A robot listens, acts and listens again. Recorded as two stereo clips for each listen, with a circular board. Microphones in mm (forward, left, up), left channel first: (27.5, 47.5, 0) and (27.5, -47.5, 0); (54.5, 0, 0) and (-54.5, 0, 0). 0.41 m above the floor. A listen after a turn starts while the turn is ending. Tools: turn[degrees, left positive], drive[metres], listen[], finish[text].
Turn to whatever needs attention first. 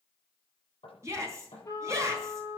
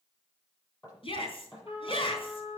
Thought: The shout: 30° right.
Action: turn[-30]
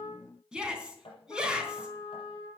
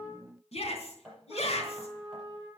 Thought: The shout is now 10° right.
Action: turn[-10]
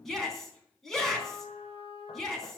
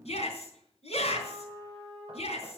Action: finish[Found it: a shout, straight ahead, 2 to 4 m away.]